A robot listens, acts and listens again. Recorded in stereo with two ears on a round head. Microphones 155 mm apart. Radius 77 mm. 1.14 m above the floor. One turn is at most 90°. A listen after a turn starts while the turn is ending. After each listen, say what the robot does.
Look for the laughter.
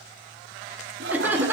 Turn 30° right.
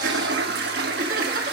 Turn 90° right.
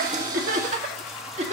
Turn 40° right.
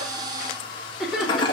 Found it: laughter, straight ahead, 2 to 4 m away.